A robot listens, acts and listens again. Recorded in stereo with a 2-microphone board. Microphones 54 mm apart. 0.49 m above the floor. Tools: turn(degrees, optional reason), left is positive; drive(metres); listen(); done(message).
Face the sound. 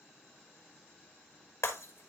turn(degrees=65, reason="The breaking glass: about 65° left or 115° left.")
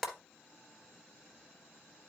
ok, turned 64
done("Facing the breaking glass, 1 to 2 m away.")